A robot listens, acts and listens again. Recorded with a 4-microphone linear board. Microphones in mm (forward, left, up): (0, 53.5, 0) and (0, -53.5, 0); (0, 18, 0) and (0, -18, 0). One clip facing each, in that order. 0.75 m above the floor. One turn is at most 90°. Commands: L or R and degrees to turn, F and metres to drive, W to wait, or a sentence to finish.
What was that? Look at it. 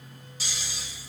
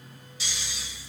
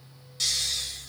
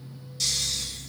L40
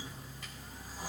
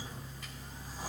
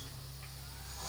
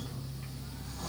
Found it: snoring, straight ahead, 1 to 2 m away.